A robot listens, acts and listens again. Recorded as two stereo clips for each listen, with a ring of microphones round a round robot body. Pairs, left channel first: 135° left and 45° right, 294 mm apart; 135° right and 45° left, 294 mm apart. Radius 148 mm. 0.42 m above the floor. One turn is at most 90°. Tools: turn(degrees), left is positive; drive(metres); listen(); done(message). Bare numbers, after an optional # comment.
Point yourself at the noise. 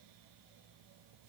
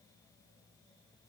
listen()
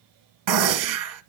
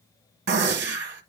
# The gunshot: 15° right.
turn(-15)
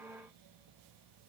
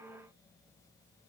done("Facing where the gunshot came from. I can't hear it now.")